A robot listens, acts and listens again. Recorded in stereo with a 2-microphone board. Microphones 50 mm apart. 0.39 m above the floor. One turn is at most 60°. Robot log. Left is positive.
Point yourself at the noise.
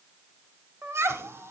note: The laughter: about 55° right or 125° right.
cmd yaw -55
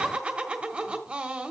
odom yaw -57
note: So it is at 30° right.
cmd yaw -30
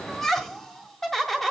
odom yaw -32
end: Facing the laughter, 1 to 2 m away.